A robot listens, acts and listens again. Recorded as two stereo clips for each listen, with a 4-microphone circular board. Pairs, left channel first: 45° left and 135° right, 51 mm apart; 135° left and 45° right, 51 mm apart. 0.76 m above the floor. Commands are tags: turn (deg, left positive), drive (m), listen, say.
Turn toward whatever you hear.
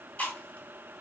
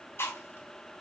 <turn deg="105"/>
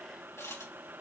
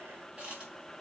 <listen/>
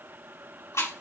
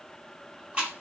<turn deg="25"/>
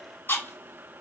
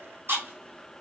<say>Facing the chewing.</say>